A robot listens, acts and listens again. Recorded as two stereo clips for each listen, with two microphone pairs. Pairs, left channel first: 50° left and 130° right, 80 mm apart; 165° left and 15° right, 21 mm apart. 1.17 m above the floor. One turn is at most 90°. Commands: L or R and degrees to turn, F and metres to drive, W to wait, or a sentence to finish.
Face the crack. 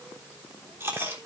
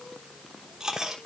W
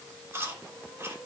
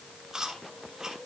W
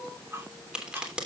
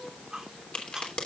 L90
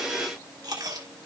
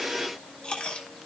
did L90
L60
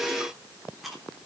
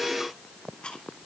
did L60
I heard a crack from this way, but can't make it out now.